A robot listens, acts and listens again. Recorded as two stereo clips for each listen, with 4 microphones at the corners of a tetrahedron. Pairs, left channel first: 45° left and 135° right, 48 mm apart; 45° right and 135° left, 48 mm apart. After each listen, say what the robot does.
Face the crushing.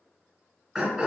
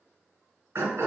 Keep listening.
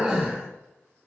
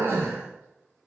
Keep listening.
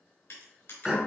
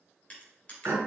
Turn 20° left.
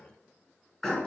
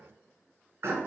Keep listening.
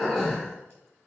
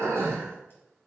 Keep listening.
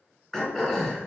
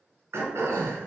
I heard crushing from this way, but can't make it out now.